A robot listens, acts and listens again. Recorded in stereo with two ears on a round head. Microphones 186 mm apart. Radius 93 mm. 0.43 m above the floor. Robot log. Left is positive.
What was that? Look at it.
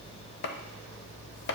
note: The chopping: about 55° left or 125° left.
cmd yaw +55
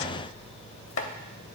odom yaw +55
note: So it is at 70° left.
cmd yaw +70
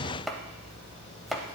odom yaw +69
end: Facing the chopping, under 1 m away.